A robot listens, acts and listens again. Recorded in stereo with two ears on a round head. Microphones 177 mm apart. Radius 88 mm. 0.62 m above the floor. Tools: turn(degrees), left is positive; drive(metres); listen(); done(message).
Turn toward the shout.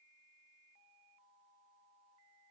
listen()
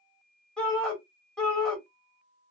turn(degrees=30)
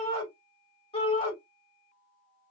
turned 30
turn(degrees=150)
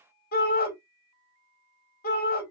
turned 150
turn(degrees=60)
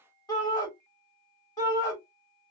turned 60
turn(degrees=20)
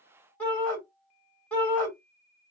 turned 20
turn(degrees=10)
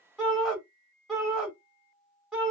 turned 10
done("Facing the shout.")